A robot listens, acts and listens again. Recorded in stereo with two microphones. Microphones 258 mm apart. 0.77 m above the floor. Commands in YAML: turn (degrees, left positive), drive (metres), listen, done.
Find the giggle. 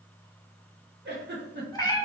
turn: -40
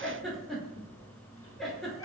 done: "Found it: a giggle, straight ahead."